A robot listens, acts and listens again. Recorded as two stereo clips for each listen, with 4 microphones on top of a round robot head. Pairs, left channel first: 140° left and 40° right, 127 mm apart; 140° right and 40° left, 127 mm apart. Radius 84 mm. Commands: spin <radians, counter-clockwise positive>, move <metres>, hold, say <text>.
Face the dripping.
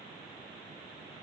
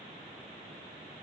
hold
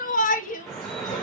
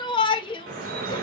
spin 0.87
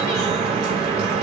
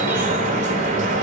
say Facing the dripping.